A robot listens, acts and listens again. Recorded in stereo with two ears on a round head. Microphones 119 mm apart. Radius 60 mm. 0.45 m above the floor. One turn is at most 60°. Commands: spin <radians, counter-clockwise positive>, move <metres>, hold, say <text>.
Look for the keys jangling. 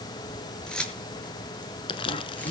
spin 0.52
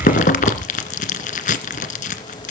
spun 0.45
hold
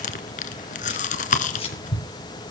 spin 1.05
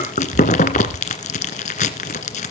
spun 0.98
spin 1.05
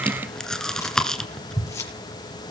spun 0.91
spin 0.44
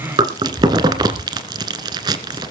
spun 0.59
spin -0.17
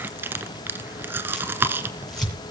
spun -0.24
hold
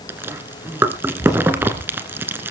say I heard keys jangling from this way, but can't make it out now.